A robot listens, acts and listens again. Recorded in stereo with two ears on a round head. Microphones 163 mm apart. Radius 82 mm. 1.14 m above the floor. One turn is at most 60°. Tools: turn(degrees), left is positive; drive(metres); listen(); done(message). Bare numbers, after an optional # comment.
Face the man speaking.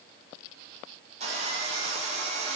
listen()
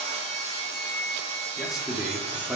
turn(30)
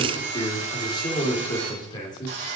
# So it is at 155° left.
turn(60)
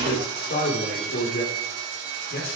# The man speaking is now 120° left.
turn(60)
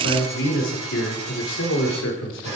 # The man speaking is now 75° left.
turn(60)
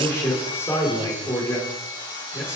# The man speaking is now 15° left.
turn(15)
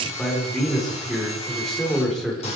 done("Found it: a man speaking, straight ahead, over 4 m away.")